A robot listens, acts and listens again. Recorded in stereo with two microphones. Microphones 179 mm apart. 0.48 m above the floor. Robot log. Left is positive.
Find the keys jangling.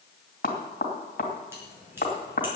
cmd yaw -30
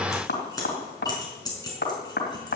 note: So it is at 20° left.
cmd yaw +20
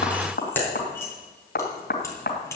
note: The keys jangling is now 15° left.
cmd yaw +15
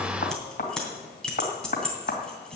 end: Found it: keys jangling, straight ahead.